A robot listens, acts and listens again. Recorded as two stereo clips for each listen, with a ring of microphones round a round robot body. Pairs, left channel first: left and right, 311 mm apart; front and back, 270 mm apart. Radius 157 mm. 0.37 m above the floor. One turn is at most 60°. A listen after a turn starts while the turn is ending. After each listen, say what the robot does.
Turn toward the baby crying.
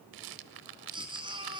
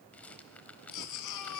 Turn 15° right.
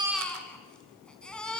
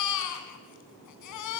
Found it: a baby crying, straight ahead.